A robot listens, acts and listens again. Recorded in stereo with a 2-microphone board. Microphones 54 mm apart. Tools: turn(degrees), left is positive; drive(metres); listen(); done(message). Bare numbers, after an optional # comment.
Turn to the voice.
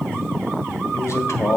# The man speaking: about 60° left or 120° left.
turn(60)
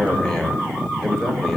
# So it is at 15° left.
turn(15)
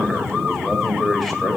done("Facing the man speaking.")